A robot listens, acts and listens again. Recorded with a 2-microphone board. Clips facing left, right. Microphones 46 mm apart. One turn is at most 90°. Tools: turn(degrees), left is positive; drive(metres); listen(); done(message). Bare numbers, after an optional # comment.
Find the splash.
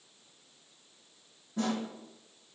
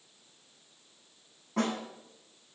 listen()
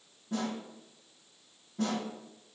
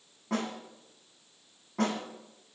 listen()
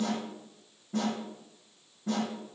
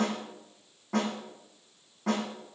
done("I can't make out a splash to turn to.")